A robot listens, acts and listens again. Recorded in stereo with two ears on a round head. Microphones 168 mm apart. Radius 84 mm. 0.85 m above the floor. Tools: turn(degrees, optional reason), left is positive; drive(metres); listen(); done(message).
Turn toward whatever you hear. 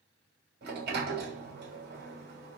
turn(degrees=-60, reason="The sliding door: about 60° right or 120° right.")
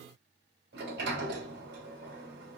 turn(degrees=-55, reason="So it is at 55° right.")
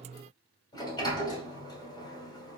turn(degrees=25, reason="The sliding door is now 25° left.")
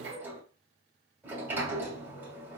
turn(degrees=-10, reason="The sliding door is now 10° right.")
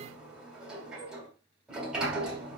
done("Found it: a sliding door, straight ahead.")